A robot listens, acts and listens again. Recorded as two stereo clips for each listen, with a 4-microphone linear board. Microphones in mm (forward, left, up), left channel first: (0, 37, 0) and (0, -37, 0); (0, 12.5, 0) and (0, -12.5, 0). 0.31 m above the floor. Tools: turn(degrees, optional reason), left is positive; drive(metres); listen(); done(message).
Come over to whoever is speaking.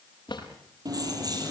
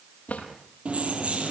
listen()
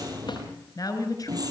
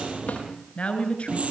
turn(degrees=55, reason="The woman speaking: about 55° left or 125° left.")
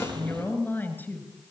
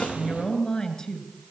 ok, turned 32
turn(degrees=25, reason="So it is at 25° left.")
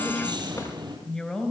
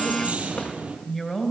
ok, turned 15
turn(degrees=10, reason="The woman speaking is now 10° left.")
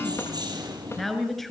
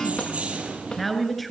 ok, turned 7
drive(metres=1.0)
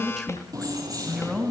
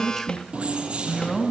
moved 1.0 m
drive(metres=1.0)
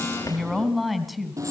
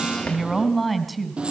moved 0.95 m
drive(metres=1.0)
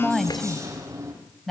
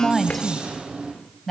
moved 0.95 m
drive(metres=1.0)
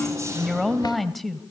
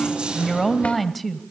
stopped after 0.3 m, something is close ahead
done("I am next to the woman speaking.")